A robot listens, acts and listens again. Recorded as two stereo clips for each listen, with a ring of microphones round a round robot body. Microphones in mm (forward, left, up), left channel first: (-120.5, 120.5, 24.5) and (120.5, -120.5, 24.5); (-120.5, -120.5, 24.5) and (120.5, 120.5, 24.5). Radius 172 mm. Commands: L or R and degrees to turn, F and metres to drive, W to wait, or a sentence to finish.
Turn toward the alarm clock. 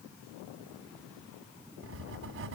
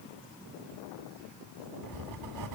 W
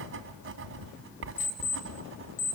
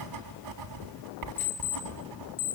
R170
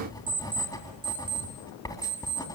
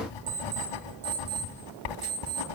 L35
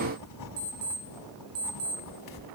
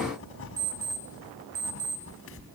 R10
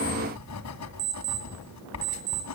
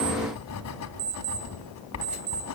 Facing the alarm clock.